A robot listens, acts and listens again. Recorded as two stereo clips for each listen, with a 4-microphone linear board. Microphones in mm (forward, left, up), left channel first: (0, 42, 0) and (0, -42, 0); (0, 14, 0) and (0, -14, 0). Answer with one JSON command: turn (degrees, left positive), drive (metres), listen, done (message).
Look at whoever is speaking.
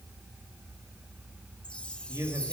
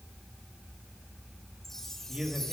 {"turn": -40}
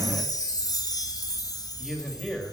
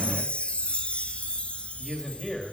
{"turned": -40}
{"done": "Facing the man speaking."}